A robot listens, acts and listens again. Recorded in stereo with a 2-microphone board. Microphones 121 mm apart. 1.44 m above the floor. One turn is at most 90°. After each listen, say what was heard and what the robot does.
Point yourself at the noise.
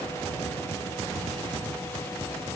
Keep listening.
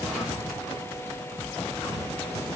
Keep listening.
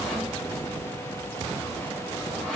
Turn 30° left.
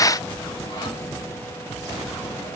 Keep listening.
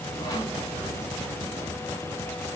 Keep listening.
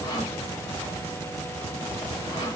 So it is at 145° left. Turn 90° left.
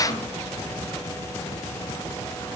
Nothing new. It was at 55° left. Turn 55° left.
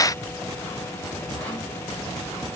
Keep listening.
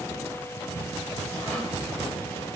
I heard sawing from this way, but can't make it out now.